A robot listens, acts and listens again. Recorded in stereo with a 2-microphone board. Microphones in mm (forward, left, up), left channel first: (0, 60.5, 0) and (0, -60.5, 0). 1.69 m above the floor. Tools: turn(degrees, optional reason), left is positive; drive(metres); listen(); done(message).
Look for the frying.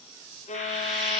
turn(degrees=30)
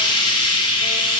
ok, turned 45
turn(degrees=135, reason="So it is at 135° left.")
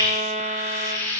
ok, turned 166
turn(degrees=-30, reason="The frying is now 30° right.")
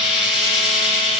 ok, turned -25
done("Facing the frying.")